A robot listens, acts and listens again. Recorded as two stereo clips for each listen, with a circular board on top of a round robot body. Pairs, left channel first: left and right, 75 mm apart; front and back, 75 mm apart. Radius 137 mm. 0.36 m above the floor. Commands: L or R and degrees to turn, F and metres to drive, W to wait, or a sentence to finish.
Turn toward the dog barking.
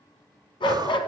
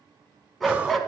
L90
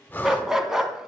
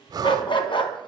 Facing the dog barking.